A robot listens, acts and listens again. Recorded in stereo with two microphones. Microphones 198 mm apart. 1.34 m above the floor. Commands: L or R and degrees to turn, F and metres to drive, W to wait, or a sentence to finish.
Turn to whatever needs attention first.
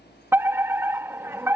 R30
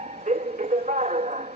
R140
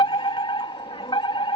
L25
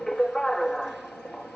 Found it: a fire alarm, straight ahead.